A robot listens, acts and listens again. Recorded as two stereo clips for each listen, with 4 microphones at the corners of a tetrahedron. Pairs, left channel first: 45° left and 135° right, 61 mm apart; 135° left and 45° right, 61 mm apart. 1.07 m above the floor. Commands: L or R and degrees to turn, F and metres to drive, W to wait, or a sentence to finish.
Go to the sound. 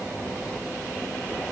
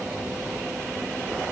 W
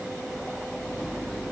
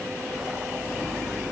W
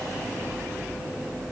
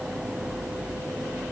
I can't make out anything.